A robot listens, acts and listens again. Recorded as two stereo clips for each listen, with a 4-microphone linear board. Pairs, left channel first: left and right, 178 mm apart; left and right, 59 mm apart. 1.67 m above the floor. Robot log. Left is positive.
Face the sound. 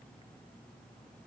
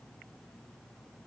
cmd idle
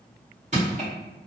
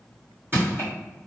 note: The crushing: about 40° right or 140° right.
cmd yaw -40
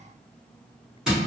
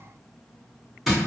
end: Facing the crushing, 1 to 2 m away.